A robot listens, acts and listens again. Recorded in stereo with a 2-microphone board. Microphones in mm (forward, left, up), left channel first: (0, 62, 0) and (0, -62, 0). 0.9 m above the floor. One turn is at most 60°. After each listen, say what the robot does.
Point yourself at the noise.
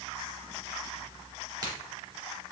Turn 30° right.
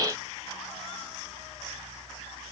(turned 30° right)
Keep listening.
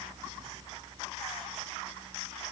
I heard a crack, but can't make it out now. It was about straight ahead or 120° right.